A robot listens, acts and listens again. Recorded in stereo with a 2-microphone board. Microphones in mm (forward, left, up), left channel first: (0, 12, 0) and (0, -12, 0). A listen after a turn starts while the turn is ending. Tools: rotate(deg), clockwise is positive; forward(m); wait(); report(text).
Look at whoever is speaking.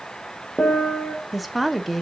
rotate(-30)
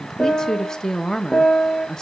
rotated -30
rotate(-155)
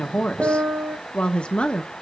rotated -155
rotate(-50)
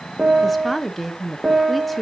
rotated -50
report("Facing the woman speaking, under 1 m away.")